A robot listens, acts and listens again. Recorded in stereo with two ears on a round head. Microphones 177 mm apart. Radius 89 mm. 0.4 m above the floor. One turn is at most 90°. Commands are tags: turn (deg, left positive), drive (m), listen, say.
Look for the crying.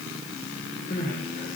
<turn deg="45"/>
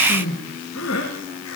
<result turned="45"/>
<turn deg="90"/>
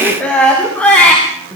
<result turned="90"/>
<say>Facing the crying.</say>